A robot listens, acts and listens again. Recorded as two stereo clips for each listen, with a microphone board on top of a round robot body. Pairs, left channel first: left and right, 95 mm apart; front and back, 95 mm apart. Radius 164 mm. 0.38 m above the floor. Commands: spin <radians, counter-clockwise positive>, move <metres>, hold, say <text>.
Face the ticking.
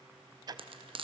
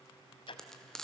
spin -0.70
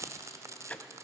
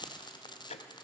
spin 0.26
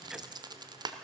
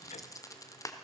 hold
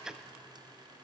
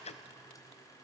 say Found it: ticking, straight ahead, under 1 m away.